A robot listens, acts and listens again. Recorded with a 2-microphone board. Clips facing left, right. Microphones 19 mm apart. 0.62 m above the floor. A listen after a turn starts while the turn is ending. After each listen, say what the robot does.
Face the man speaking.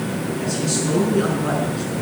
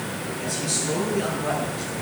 Turn 70° left.
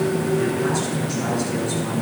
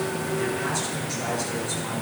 Keep listening.
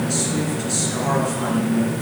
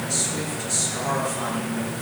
Turn 20° left.
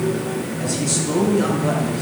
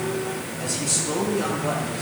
Turn 10° left.
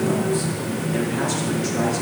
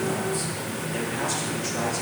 Keep listening.
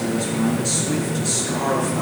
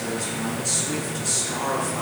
Facing the man speaking.